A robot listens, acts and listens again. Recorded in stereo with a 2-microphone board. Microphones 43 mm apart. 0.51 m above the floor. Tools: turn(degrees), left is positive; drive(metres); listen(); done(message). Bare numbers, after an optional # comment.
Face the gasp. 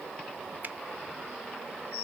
listen()
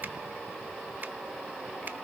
listen()
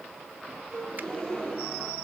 # The gasp: about 15° left or 165° left.
turn(15)
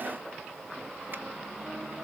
listen()
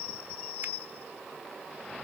done("I heard a gasp, but can't make it out now. It was about straight ahead or 150° left.")